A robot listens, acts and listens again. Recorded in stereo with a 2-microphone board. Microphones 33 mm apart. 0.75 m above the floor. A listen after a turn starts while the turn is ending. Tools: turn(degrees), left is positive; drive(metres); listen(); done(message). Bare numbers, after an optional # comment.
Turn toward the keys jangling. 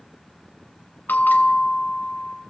listen()
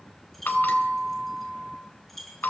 turn(30)
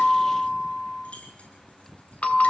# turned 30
# So it is at 140° left.
turn(140)
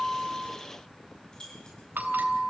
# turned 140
# The keys jangling is now 20° left.
turn(20)
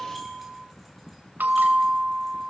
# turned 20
listen()
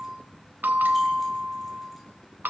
listen()
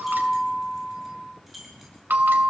done("Facing the keys jangling.")